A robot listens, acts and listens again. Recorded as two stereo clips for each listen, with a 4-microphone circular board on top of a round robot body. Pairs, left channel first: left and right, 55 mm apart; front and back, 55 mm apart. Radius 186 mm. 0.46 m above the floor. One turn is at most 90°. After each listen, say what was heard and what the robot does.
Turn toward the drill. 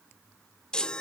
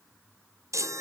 Keep listening.
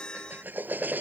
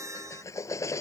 The drill: 35° right. Turn 35° right.
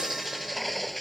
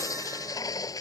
Found it: a drill, straight ahead.